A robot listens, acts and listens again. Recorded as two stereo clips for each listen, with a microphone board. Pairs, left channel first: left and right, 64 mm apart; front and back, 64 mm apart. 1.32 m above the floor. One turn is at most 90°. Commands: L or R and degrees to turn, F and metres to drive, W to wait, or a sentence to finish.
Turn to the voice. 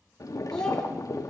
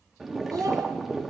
L90
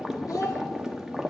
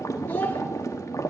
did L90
L65
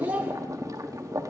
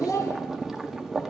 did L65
R20
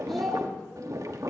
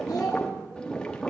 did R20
Facing the child speaking.